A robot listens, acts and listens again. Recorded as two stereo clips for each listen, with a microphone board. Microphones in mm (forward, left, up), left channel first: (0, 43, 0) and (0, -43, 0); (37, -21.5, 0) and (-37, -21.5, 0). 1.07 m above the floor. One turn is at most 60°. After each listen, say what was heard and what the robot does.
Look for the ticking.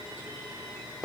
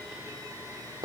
Keep listening.
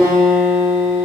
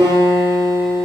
Keep listening.
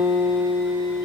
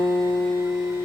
I can't make out ticking to turn to.